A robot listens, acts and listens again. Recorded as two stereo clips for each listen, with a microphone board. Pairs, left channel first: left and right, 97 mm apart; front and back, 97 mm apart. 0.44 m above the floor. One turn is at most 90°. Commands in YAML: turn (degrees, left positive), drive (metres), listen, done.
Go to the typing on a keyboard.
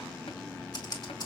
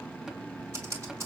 turn: 90
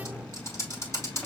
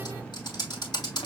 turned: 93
turn: 35
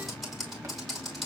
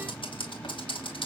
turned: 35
drive: 1.0
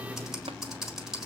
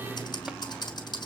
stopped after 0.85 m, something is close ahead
done: "Arrived at the typing on a keyboard, straight ahead."